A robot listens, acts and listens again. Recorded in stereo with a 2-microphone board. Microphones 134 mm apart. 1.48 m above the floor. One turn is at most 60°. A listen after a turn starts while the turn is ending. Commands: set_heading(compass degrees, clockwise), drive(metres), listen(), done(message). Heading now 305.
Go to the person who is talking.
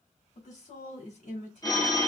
set_heading(245)
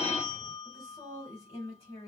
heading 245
set_heading(200)
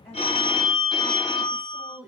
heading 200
drive(1.0)
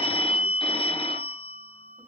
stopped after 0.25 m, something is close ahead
listen()
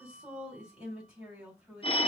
done("Blocked. The woman speaking is further on, straight ahead.")